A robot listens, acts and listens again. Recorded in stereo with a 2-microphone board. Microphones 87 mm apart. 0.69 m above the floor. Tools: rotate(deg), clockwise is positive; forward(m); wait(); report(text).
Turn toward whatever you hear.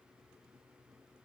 wait()
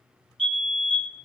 rotate(-30)
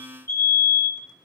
rotate(-140)
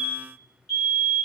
report("Facing the fire alarm.")